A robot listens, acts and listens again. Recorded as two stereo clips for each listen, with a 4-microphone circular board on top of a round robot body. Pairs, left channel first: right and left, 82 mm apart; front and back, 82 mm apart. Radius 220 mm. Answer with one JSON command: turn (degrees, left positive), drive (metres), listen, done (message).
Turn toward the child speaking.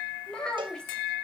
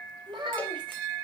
{"turn": -170}
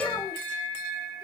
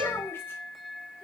{"listen": true}
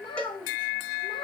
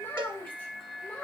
{"turn": -75}
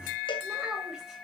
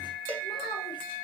{"listen": true}
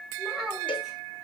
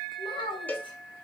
{"done": "Found it: a child speaking, straight ahead, 2 to 4 m away."}